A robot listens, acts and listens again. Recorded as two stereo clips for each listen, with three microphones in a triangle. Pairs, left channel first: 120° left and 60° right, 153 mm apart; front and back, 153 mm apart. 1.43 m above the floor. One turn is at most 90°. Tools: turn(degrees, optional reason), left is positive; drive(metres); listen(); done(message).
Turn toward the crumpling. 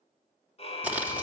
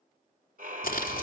turn(degrees=20, reason="The crumpling: 20° left.")
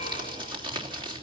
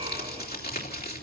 done("Found it: crumpling, straight ahead.")